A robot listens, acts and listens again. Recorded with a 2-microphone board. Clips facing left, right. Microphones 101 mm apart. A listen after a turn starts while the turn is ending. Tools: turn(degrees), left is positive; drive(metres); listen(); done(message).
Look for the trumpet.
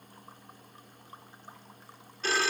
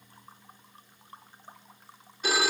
listen()
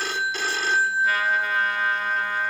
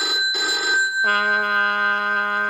turn(degrees=-60)
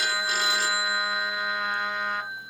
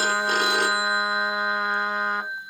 turn(degrees=-40)
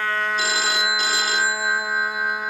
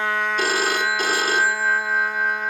turn(degrees=10)
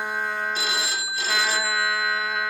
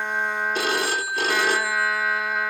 done("Facing the trumpet, under 1 m away.")